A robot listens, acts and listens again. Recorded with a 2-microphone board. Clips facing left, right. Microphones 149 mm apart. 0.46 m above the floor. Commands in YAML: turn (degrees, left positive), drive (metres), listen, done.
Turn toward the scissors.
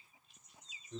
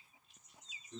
listen: true
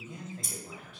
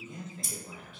turn: 30
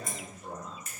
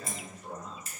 turn: -30
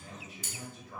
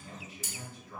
done: "Found it: scissors, straight ahead."